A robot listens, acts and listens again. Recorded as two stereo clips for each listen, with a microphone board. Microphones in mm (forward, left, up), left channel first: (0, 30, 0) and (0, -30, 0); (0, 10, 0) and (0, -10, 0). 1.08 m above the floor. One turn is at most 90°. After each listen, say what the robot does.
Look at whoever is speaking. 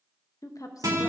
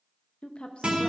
Turn 70° left.
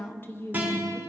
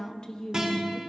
Turn 35° left.
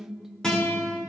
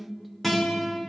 Facing the woman speaking.